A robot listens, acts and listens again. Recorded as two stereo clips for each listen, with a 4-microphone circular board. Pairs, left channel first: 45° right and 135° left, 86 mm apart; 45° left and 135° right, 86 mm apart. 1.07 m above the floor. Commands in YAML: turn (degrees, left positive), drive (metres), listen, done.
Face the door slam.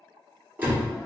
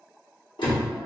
turn: 65
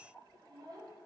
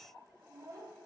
done: "I heard a door slam from this way, but can't make it out now."